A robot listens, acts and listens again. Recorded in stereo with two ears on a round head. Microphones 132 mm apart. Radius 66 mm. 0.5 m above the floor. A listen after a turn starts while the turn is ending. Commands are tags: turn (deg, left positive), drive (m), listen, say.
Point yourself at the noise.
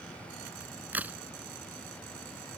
<turn deg="-30"/>
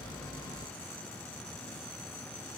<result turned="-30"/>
<listen/>
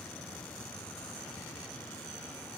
<say>I heard a crack, but can't make it out now. It was about 20° left or 140° right.</say>